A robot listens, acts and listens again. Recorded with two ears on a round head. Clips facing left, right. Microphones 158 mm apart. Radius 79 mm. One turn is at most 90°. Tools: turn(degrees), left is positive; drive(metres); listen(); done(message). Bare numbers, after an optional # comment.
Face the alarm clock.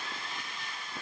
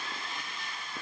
listen()
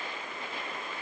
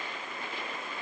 listen()
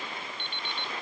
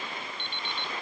turn(-90)
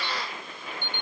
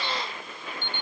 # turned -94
# So it is at 15° left.
turn(15)
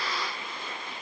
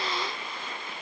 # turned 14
listen()
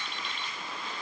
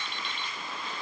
done("Found it: an alarm clock, straight ahead.")